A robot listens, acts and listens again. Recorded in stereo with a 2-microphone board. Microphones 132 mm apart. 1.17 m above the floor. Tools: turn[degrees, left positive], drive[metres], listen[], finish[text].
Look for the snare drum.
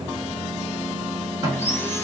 Thought: The snare drum: about 30° right or 150° right.
Action: turn[-30]
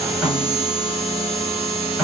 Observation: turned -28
Action: finish[Facing the snare drum.]